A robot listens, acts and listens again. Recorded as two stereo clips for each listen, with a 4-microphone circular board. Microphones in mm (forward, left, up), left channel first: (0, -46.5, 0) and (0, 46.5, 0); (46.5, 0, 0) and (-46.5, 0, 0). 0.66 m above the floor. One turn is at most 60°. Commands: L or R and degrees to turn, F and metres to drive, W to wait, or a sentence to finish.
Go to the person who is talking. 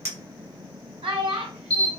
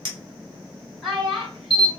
L60
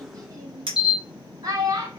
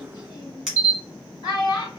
L40
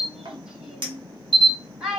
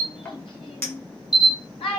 F1.0
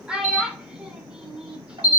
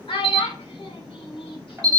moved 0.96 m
L10
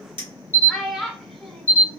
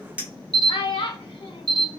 F1.0
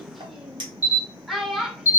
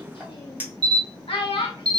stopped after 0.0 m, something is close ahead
I am next to the child speaking.